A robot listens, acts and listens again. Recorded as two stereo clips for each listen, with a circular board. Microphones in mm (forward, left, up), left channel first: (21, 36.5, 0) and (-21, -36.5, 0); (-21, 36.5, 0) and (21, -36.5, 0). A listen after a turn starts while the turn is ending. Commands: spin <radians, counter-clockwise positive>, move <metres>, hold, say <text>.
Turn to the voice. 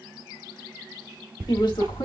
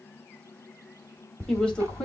spin 0.79
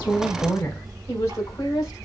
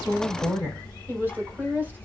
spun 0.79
spin 0.17
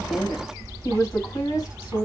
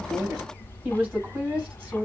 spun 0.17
spin 0.17
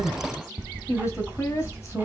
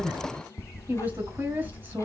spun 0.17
say Found it: a woman speaking, straight ahead.